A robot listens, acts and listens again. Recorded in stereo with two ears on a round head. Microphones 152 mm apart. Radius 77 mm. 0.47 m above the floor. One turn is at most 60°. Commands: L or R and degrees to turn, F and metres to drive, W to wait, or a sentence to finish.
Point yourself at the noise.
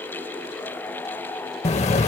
L40
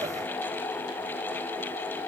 W
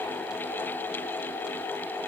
I heard an explosion, but can't make it out now. It was about straight ahead or 100° left.